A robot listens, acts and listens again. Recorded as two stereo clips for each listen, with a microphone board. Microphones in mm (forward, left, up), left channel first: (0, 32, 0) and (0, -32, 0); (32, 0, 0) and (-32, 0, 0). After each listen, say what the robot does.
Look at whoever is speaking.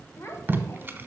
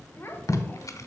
Turn 55° left.
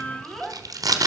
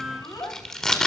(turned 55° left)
Found it: a child speaking, straight ahead, 1 to 2 m away.